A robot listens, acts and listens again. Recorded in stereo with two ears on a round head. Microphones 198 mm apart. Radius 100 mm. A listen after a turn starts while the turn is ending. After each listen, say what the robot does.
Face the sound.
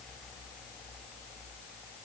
Keep listening.
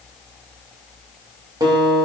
Turn 20° right.
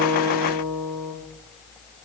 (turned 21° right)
Turn 140° right.
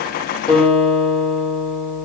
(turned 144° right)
Found it: a guitar, straight ahead.